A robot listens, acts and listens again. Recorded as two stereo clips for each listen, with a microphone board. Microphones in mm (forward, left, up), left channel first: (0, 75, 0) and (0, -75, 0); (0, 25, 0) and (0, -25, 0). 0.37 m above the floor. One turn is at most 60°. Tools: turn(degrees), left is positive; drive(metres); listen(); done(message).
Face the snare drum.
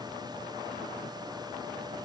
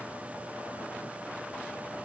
listen()
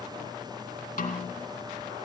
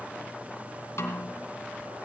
turn(degrees=60)
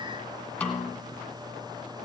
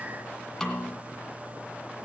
turn(degrees=10)
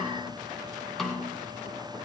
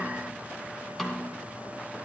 done("Facing the snare drum.")